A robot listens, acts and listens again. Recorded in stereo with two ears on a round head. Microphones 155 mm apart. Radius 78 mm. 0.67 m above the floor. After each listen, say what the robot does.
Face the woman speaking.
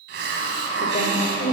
Turn 40° left.
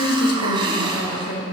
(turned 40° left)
Turn 110° left.
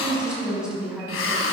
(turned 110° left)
Found it: a woman speaking, straight ahead, over 4 m away.